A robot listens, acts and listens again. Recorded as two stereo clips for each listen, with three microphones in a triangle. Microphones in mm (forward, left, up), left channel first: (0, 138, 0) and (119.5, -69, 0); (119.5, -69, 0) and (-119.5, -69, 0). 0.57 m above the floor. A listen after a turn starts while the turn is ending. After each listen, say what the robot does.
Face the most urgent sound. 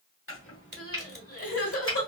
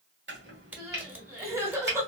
Turn 100° left.
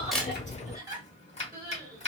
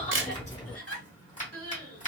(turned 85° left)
Turn 15° left.
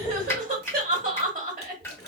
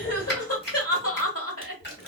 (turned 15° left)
Found it: crying, straight ahead, 1 to 2 m away.